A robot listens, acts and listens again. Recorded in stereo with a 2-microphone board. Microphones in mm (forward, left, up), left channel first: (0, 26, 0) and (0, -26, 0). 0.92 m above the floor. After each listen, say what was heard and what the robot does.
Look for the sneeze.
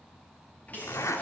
The sneeze: about 30° left or 150° left. Turn 30° left.
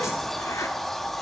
Keep listening.
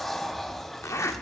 I heard a sneeze, but can't make it out now. It was about straight ahead or 120° left.